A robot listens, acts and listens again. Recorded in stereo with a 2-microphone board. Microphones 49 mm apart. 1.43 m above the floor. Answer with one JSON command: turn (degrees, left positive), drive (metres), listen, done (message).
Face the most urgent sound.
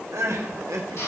{"turn": -75}
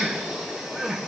{"turn": -10}
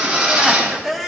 {"done": "Found it: crying, straight ahead."}